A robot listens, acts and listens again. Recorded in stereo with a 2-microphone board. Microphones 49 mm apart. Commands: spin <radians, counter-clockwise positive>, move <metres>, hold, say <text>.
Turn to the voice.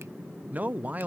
spin -0.61
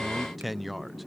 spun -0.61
say Facing the man speaking.